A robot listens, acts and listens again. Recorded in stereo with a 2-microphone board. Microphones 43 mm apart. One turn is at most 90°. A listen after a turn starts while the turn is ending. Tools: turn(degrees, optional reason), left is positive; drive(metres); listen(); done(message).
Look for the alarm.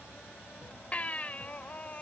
listen()
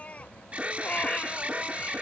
turn(degrees=-30, reason="The alarm: about 30° right or 150° right.")
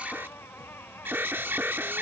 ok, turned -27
turn(degrees=-90, reason="So it is at 125° right.")
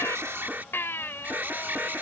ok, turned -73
turn(degrees=-50, reason="The alarm is now 50° right.")
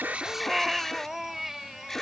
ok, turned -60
turn(degrees=10, reason="The alarm is now 10° left.")
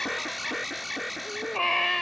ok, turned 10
done("Found it: an alarm, straight ahead.")